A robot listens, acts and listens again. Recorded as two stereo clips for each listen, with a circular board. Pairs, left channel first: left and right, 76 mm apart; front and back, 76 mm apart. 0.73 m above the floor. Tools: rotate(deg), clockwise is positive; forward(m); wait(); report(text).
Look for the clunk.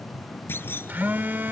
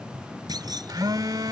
rotate(-150)
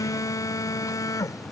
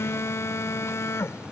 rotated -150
report("Facing where the clunk came from. I can't hear it now.")